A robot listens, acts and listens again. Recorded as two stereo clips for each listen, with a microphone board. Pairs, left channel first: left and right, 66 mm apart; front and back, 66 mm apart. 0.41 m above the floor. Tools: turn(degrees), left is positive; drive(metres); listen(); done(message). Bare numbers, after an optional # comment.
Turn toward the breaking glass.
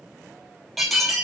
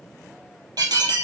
# The breaking glass: straight behind.
turn(180)
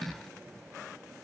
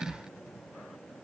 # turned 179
done("I heard breaking glass from this way, but can't make it out now.")